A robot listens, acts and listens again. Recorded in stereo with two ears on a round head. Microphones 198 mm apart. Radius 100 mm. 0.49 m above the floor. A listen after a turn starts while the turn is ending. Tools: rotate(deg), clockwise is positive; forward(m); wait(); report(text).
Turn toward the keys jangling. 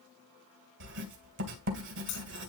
rotate(-90)
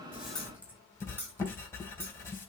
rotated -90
rotate(10)
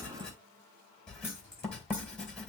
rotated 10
rotate(10)
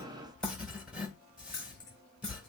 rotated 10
report("Found it: keys jangling, straight ahead, over 4 m away.")